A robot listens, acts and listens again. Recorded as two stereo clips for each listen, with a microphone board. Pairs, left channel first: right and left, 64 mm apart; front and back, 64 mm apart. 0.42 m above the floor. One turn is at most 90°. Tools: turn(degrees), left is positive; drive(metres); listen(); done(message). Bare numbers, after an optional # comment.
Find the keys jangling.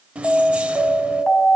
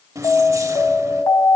# The keys jangling: 155° left.
turn(90)
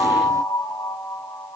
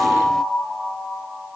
# Nothing new. It was at 65° left.
turn(65)
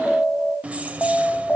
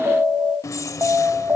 # The keys jangling is now 25° left.
turn(25)
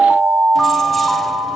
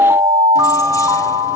listen()
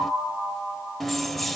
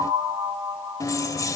done("Found it: keys jangling, straight ahead, 1 to 2 m away.")